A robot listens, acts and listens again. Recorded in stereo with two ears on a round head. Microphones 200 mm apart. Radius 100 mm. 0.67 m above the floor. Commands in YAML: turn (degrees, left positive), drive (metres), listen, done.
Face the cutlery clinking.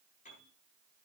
listen: true
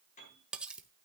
turn: -30
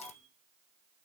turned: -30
listen: true
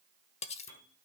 turn: 30
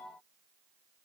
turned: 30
listen: true
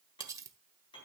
turn: -15
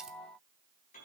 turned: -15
listen: true
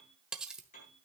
done: "Found it: cutlery clinking, straight ahead, under 1 m away."